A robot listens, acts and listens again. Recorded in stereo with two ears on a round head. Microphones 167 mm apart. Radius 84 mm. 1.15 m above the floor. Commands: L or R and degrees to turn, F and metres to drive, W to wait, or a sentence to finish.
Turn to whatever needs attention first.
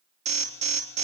R40
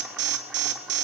R95
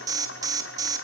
R20
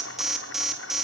Facing the alarm, 2 to 4 m away.